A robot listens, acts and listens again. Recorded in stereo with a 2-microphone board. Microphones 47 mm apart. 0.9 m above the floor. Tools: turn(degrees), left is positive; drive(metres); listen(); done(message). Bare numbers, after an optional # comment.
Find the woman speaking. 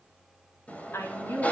# The woman speaking: about 60° left or 120° left.
turn(60)
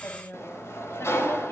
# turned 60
# So it is at 65° left.
turn(65)
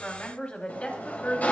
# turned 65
# The woman speaking is now 30° left.
turn(30)
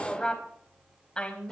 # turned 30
# The woman speaking is now 25° left.
turn(25)
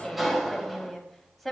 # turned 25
done("Facing the woman speaking, over 4 m away.")